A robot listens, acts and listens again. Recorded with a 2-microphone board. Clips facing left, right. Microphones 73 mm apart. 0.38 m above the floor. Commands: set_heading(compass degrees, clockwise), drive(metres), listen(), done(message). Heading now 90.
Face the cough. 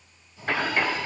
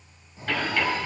set_heading(60)
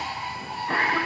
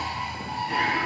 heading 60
set_heading(300)
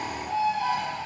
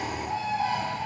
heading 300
listen()
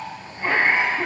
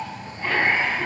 set_heading(275)
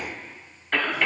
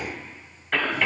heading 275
done("Facing the cough.")